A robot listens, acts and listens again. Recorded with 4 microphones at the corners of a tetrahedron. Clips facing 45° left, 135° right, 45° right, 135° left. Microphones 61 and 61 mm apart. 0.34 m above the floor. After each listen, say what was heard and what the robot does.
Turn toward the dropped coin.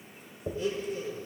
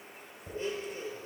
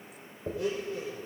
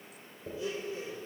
Facing the dropped coin, 2 to 4 m away.